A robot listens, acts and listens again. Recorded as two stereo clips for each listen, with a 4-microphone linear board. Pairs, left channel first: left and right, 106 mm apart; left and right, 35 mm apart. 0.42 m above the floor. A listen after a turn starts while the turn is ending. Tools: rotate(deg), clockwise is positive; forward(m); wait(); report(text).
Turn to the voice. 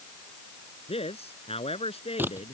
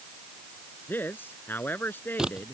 rotate(-70)
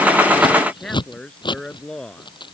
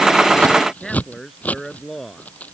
report("Facing the man speaking.")